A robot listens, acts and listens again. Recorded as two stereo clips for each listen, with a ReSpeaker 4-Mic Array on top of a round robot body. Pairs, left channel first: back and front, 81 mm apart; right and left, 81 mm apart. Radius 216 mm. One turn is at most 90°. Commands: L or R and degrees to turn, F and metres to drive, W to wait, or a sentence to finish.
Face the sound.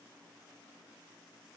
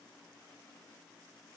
W
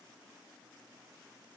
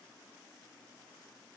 W
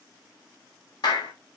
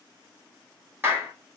L90
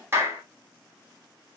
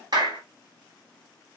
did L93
L60
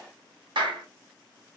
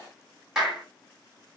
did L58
Found it: a clap, straight ahead.